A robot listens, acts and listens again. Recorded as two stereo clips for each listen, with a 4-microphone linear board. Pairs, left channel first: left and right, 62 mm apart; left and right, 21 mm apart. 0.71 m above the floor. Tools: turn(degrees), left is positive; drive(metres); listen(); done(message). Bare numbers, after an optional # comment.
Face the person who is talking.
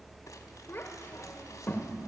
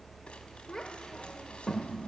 # The child speaking: about 30° left or 150° left.
turn(30)
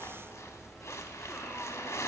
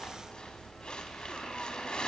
listen()
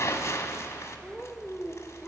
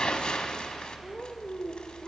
done("Found it: a child speaking, straight ahead, 1 to 2 m away.")